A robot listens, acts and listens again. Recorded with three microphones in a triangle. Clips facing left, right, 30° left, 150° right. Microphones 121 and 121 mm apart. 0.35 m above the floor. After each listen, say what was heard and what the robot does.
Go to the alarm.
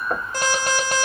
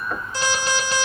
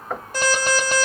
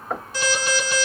The alarm: 60° left. Turn 60° left.
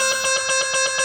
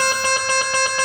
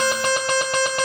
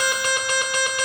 The alarm is now 15° left. Turn 15° left.
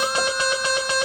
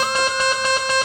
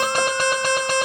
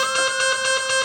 Drive 1.0 m forward.
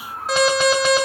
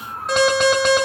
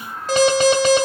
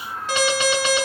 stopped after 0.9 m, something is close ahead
Arrived at the alarm, straight ahead.